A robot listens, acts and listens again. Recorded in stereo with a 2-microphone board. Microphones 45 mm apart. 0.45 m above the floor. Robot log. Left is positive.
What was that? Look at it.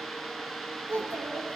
note: The child speaking: about 55° right or 125° right.
cmd yaw -55
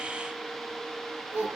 note: So it is at 70° right.
cmd yaw -70
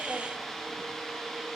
cmd idle
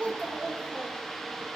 note: The child speaking is now 25° right.
cmd yaw -25
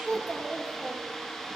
end: Found it: a child speaking, straight ahead.